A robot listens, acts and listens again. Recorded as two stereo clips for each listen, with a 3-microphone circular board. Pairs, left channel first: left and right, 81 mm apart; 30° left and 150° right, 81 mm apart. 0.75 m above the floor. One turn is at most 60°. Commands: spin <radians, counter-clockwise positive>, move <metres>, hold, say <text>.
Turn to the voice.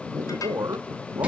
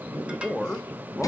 spin -0.87
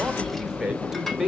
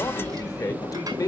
say Facing the man speaking, under 1 m away.